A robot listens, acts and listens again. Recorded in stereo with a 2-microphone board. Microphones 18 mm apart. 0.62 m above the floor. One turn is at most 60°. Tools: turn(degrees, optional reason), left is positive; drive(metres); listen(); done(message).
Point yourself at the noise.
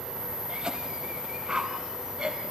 turn(degrees=-40, reason="The cough: about 40° right or 140° right.")
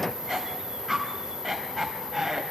done("Facing the cough.")